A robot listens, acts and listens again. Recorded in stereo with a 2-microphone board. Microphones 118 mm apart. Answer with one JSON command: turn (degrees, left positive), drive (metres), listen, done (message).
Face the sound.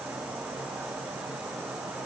{"listen": true}
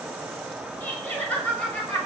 {"turn": 30}
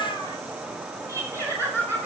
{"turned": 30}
{"turn": 20}
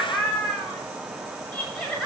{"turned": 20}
{"turn": 155}
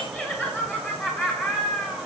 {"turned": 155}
{"done": "Found it: laughter, straight ahead."}